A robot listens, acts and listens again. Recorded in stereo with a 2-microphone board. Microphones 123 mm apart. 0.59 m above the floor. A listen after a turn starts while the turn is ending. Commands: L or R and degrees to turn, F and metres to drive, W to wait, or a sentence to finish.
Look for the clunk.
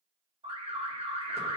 W
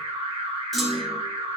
L30
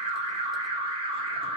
W
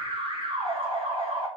I heard a clunk, but can't make it out now. It was about 30° right or 150° left.